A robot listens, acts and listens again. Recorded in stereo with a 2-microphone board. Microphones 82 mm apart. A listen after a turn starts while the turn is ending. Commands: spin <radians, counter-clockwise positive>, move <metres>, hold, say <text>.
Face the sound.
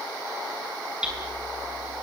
spin -0.52
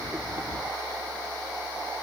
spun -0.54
hold
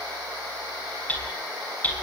spin 0.35
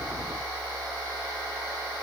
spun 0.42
hold
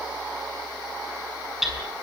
say Found it: hammering, straight ahead, over 4 m away.